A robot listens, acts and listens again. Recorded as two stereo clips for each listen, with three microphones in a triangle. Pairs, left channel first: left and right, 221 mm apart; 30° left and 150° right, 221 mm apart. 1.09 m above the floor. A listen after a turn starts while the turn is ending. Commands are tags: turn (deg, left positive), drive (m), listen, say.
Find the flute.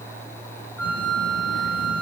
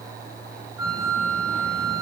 <turn deg="10"/>
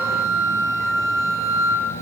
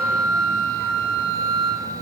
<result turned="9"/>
<say>Found it: a flute, straight ahead, over 4 m away.</say>